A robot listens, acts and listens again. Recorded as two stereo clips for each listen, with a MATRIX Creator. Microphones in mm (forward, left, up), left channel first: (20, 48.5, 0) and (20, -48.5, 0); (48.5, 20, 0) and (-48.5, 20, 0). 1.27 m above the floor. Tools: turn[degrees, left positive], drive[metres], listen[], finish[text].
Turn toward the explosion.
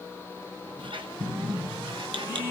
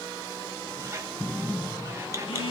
Thought: The explosion: 90° right.
Action: turn[-90]
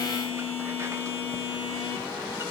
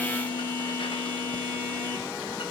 Action: finish[Facing where the explosion came from. I can't hear it now.]